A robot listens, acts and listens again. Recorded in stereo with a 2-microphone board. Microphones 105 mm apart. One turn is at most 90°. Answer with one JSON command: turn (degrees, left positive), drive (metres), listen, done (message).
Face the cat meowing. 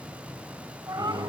{"turn": -40}
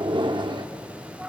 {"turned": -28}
{"turn": -10}
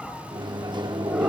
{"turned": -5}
{"listen": true}
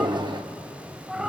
{"done": "Found it: a cat meowing, straight ahead."}